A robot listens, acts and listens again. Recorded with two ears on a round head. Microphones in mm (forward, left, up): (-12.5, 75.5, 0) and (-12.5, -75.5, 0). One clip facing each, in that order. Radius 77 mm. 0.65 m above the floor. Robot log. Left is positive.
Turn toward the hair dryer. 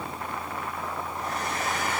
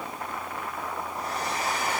note: The hair dryer: about 35° right or 145° right.
cmd yaw -35
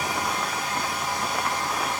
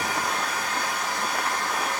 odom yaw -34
note: So it is at 110° right.
cmd yaw -110
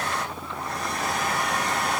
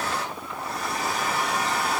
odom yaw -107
end: Found it: a hair dryer, straight ahead.